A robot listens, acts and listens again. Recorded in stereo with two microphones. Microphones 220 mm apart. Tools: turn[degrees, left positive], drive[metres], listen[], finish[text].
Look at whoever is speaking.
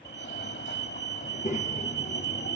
Thought: The child speaking: about 35° left or 145° left.
Action: turn[35]
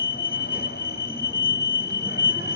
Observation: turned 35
Action: listen[]
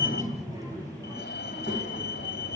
Thought: So it is at 20° right.
Action: turn[-20]
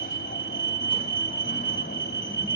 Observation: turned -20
Action: listen[]
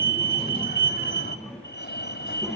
Action: finish[Facing the child speaking, over 4 m away.]